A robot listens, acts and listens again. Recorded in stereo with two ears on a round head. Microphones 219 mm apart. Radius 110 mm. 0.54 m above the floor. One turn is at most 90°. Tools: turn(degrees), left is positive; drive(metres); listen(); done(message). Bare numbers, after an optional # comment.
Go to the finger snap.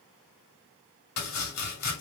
listen()
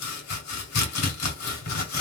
listen()
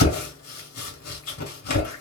done("I can't make out a finger snap, only chopping.")